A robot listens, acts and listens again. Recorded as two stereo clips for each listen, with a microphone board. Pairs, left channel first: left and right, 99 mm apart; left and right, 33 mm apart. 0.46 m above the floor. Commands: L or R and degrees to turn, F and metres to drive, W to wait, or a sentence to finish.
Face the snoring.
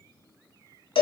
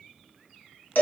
W
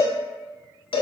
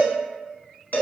W
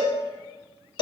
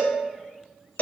I can't make out snoring to turn to.